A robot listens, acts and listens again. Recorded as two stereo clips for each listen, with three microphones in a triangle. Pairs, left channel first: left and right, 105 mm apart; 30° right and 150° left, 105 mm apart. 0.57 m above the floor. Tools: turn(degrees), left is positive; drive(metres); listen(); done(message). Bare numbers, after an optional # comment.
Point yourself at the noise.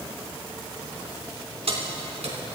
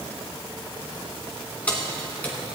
# The keys jangling: 105° right.
turn(-105)
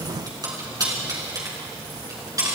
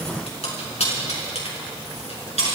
# The keys jangling is now 35° right.
turn(-35)
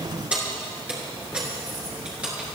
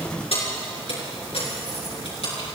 # The keys jangling is now 10° right.
turn(-10)
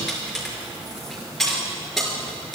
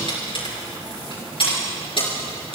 done("Found it: keys jangling, straight ahead, over 4 m away.")